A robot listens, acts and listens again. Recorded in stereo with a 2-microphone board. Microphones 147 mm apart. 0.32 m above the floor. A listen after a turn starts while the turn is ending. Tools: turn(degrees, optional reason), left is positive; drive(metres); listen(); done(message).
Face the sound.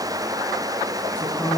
turn(degrees=30)
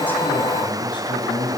turn(degrees=150, reason="So it is at 150° left.")
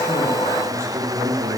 turn(degrees=-20, reason="The man speaking is now 20° right.")
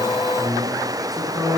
done("Found it: a man speaking, straight ahead, over 4 m away.")